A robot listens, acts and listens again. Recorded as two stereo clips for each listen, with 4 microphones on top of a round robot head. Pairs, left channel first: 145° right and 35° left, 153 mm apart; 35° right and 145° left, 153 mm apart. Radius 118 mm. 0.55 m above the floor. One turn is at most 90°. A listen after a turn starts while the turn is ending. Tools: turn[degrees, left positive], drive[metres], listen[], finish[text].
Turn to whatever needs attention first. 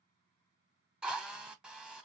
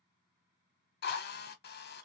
Action: listen[]
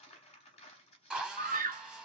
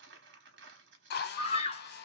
Thought: The scream: 15° left.
Action: turn[15]
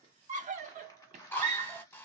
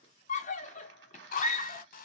Action: finish[Found it: a scream, straight ahead, 1 to 2 m away.]